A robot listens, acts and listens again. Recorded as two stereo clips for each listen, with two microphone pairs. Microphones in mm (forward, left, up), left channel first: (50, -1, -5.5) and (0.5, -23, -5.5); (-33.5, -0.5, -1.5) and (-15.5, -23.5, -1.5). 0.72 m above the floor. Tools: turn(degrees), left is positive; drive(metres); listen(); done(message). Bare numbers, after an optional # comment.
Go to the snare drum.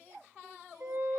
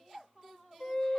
listen()
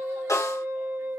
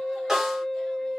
# The snare drum: 25° left.
turn(25)
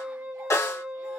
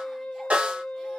drive(1.0)
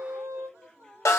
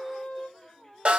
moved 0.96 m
drive(1.0)
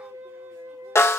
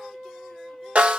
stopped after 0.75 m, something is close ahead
# The snare drum is now 10° right.
turn(-10)
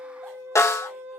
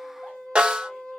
done("Arrived at the snare drum, straight ahead.")